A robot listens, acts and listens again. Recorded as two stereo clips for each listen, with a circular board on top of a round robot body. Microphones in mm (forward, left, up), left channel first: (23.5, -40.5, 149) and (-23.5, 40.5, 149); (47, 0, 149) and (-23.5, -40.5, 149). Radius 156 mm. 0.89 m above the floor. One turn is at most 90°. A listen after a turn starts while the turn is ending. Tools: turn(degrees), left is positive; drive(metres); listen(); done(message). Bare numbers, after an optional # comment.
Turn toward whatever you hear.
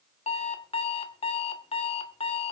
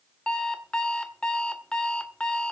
# The alarm clock: 50° right.
turn(-50)
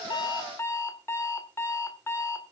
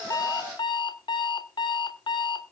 done("Found it: an alarm clock, straight ahead.")